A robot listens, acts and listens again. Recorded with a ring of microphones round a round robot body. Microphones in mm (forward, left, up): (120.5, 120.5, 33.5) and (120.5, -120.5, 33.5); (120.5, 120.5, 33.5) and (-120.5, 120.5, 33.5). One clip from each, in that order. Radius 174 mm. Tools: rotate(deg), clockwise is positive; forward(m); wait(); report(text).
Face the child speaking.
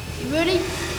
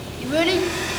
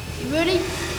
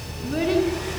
report("Found it: a child speaking, straight ahead.")